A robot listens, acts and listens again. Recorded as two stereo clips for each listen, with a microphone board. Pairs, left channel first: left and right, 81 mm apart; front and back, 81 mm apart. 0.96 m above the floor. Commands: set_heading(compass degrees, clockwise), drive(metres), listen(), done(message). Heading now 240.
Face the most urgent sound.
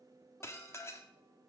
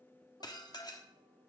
listen()
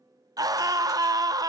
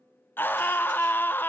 set_heading(300)
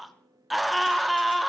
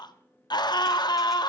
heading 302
done("Found it: a scream, straight ahead.")